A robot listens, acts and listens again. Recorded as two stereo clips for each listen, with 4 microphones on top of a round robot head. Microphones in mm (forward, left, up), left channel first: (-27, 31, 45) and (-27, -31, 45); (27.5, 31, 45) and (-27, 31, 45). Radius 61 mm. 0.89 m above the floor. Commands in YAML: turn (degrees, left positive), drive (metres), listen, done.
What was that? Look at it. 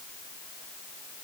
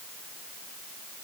listen: true
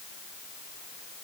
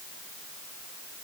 listen: true
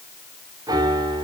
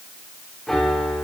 turn: -85
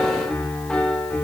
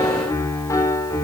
turn: 15
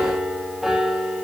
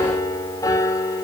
done: "Found it: a piano, straight ahead."